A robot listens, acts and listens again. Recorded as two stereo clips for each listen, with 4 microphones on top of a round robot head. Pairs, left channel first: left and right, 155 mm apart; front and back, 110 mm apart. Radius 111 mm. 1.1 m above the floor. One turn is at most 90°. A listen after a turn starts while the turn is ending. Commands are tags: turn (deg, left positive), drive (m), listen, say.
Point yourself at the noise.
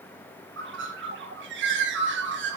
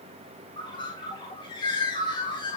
<turn deg="-70"/>
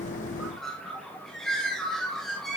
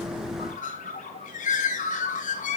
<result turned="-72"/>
<say>Found it: a bird, straight ahead.</say>